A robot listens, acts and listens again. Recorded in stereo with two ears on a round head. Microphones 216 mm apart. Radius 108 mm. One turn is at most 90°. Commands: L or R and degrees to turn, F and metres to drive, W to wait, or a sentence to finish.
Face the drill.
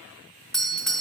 W
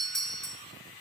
W
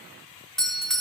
I can't make out a drill to turn to.